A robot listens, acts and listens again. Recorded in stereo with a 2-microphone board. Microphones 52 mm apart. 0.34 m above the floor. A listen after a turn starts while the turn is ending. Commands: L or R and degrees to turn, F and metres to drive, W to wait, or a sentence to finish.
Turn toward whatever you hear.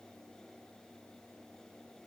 W
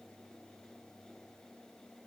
W
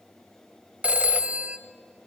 R25
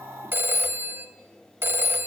R125
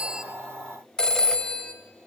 L15
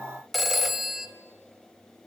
Facing the phone ringing, under 1 m away.